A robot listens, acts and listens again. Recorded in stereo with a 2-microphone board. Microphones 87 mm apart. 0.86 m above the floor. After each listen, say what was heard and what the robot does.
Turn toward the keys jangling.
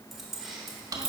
Turn 30° right.
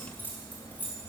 So it is at 20° left. Turn 20° left.
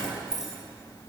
Facing the keys jangling.